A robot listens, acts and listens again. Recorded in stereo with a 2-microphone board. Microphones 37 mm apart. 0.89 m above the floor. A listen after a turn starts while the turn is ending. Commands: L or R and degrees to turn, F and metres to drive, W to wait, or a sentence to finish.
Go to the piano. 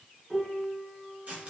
R30
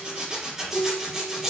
L20
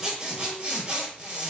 W
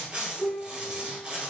F1.0
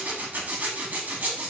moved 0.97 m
W
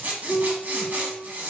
F1.0
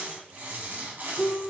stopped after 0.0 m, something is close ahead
Arrived at the piano, straight ahead.